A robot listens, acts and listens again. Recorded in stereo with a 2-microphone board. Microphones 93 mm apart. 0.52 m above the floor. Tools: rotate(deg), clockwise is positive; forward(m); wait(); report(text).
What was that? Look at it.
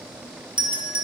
rotate(60)
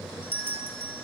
rotate(25)
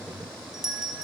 report("Found it: a doorbell, straight ahead, 2 to 4 m away.")